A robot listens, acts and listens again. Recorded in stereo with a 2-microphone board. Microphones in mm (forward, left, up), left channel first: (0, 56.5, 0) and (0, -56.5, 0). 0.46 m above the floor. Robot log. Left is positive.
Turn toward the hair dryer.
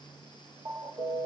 cmd idle
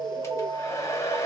note: The hair dryer: about 25° left or 155° left.
cmd yaw +25
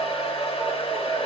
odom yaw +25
note: So it is at 125° left.
cmd yaw +125
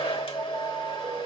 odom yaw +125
note: The hair dryer is now 55° left.
cmd yaw +55
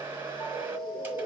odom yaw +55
note: The hair dryer is now 20° right.
cmd yaw -20
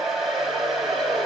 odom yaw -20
end: Found it: a hair dryer, straight ahead.